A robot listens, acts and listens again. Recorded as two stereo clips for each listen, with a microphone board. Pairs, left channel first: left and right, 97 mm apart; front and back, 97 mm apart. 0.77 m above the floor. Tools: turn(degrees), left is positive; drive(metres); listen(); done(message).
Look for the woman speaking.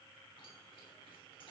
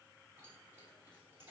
listen()
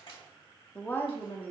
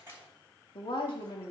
turn(degrees=30)
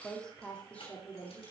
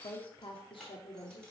turn(degrees=20)
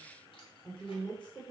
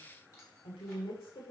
turn(degrees=15)
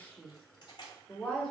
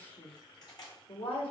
done("Found it: a woman speaking, straight ahead, 2 to 4 m away.")